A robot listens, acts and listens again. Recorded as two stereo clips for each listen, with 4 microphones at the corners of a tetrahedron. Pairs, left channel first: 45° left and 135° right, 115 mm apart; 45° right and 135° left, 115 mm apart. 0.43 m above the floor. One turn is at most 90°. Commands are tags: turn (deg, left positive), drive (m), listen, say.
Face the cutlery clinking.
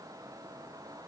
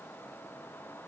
<listen/>
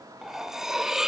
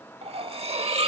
<turn deg="90"/>
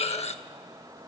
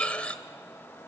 <turn deg="30"/>
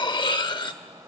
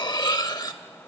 <say>Found it: cutlery clinking, straight ahead.</say>